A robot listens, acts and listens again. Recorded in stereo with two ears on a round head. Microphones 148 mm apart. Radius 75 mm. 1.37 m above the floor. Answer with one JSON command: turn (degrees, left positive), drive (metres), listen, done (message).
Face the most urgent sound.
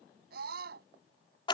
{"turn": -65}
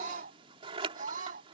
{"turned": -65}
{"turn": -50}
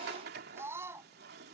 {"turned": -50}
{"turn": -15}
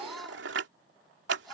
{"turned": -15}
{"done": "Found it: a scream, straight ahead."}